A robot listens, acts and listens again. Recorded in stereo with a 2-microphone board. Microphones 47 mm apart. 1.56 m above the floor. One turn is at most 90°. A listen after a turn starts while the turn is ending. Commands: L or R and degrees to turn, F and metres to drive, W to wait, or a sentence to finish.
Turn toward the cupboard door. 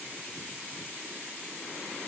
W
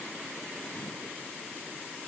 W
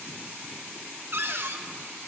R50
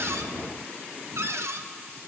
R75
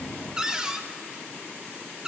R15
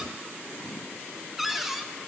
Found it: a cupboard door, straight ahead.